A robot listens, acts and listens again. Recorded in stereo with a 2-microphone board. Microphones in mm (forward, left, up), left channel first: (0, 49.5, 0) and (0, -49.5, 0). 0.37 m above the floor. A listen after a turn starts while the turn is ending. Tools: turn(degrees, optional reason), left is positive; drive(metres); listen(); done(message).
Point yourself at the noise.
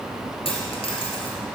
turn(degrees=70, reason="The dropped coin: about 70° left or 110° left.")
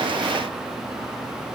listen()
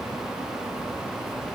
done("I heard a dropped coin, but can't make it out now. It was about straight ahead or 40° left.")